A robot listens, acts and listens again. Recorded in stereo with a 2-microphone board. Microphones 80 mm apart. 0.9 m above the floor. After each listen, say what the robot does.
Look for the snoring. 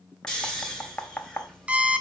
Turn 30° left.
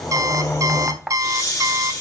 Turn 140° left.
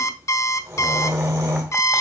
Turn 35° right.
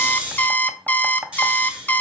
Turn 15° right.
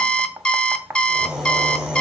Found it: snoring, straight ahead.